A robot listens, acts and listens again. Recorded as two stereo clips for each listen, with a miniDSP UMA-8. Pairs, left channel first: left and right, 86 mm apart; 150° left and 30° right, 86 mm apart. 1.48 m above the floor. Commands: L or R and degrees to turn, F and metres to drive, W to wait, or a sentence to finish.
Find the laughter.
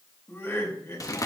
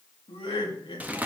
L145
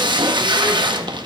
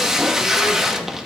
W
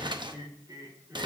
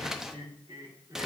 R50
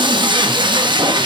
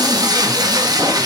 W
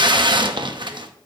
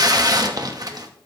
W
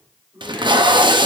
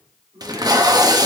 R15
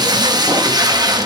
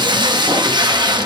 W
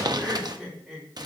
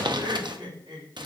Found it: laughter, straight ahead.